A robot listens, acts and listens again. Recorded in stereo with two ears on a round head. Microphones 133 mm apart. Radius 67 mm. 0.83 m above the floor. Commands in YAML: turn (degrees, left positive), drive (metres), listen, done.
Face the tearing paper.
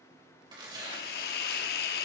turn: -30
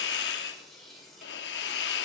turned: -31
done: "Found it: tearing paper, straight ahead."